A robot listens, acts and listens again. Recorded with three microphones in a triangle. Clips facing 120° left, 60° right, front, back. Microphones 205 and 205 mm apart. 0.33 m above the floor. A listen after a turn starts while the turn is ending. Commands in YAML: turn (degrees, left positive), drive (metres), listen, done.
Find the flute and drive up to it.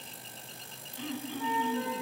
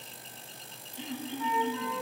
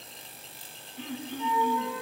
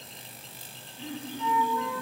turn: 65
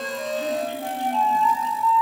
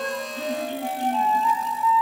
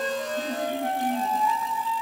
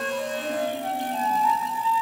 turn: 30
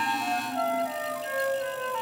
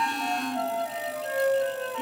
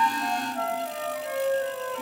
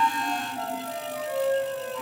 drive: 1.0
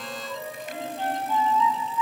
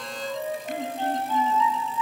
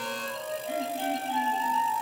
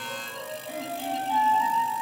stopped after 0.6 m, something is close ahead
done: "Something is in my way. I am facing the flute but have not reached it."